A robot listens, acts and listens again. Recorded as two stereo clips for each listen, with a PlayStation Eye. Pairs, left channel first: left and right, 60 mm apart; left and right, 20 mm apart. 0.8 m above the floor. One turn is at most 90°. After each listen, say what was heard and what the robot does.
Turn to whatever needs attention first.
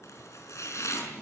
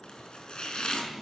Keep listening.
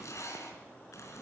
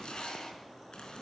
Keep listening.
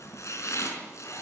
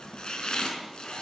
I can't make out anything urgent, only chopping.